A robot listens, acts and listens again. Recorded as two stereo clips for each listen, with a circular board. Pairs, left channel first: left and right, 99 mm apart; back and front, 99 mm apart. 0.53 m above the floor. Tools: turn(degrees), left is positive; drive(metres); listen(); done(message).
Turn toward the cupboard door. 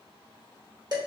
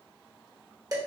listen()
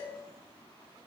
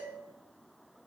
listen()
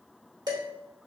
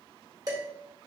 done("I can't make out a cupboard door, only dishes clattering.")